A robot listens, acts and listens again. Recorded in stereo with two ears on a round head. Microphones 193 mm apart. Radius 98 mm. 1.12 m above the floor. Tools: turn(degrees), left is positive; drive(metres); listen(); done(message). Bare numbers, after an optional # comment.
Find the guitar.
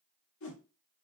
listen()
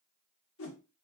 listen()
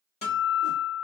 # The guitar: about 35° left or 145° left.
turn(35)
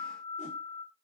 # So it is at 110° left.
turn(110)
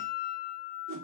# The guitar is now 10° left.
turn(10)
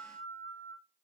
done("Found it: a guitar, straight ahead.")